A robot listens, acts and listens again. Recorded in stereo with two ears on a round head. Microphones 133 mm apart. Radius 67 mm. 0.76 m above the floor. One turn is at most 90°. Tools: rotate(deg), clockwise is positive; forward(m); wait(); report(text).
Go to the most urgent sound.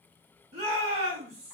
rotate(50)
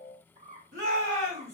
rotate(75)
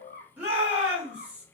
rotate(10)
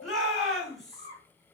forward(1.0)
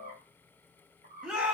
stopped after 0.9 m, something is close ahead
report("Arrived at the shout, straight ahead.")